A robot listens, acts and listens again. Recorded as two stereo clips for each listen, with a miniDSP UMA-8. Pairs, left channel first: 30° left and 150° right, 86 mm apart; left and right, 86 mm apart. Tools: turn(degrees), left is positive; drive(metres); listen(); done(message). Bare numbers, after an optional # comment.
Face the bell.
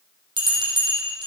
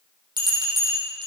# The bell: 125° right.
turn(-125)
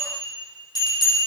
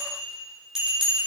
done("Found it: a bell, straight ahead, over 4 m away.")